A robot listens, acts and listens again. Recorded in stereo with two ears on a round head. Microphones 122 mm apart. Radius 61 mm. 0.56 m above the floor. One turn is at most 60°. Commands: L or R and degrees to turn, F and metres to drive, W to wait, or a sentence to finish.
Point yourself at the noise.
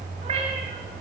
R40
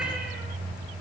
Facing the cat meowing.